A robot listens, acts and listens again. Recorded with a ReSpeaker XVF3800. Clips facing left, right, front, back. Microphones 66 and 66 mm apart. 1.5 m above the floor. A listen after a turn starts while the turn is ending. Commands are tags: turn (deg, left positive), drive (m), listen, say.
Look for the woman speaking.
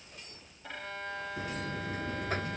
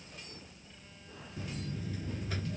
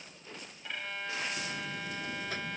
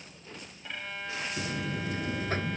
<listen/>
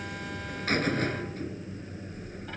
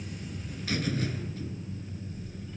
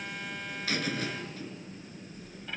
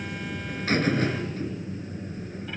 <listen/>
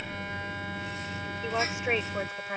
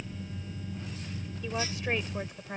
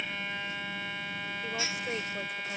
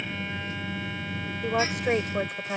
<turn deg="155"/>
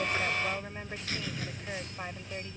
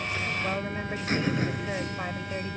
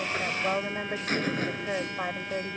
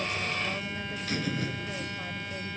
<listen/>
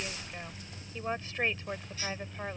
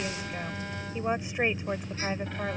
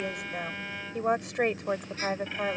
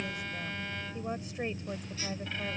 <turn deg="-15"/>
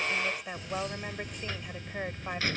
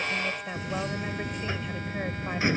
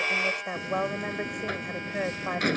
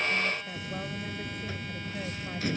<say>Facing the woman speaking.</say>